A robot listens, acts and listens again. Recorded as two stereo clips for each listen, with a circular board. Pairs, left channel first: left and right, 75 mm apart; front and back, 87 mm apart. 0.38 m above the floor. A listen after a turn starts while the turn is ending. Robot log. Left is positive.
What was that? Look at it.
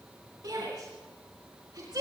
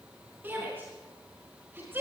note: The shout: 115° right.
cmd yaw -115
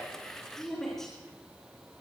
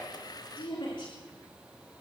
end: Facing the shout.